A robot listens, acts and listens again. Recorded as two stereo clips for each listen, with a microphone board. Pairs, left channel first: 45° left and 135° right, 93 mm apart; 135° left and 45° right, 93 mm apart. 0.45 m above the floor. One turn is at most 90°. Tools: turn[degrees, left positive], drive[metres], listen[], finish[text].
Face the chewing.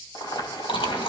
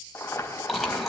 Thought: The chewing: 45° left.
Action: turn[45]
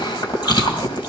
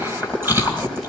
Thought: The chewing is now 20° left.
Action: turn[20]
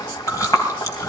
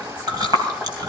Action: finish[Found it: chewing, straight ahead, 2 to 4 m away.]